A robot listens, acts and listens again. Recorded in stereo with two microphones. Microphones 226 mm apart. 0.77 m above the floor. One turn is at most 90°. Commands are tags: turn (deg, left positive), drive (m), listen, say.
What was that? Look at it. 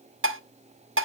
<turn deg="-70"/>
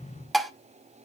<say>Facing the dishes clattering, 1 to 2 m away.</say>